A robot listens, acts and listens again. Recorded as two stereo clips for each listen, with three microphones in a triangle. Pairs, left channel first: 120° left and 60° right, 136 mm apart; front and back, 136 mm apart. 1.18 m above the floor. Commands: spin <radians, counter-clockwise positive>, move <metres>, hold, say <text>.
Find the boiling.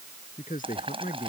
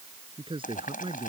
spin -0.17
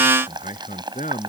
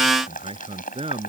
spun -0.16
say Found it: boiling, straight ahead.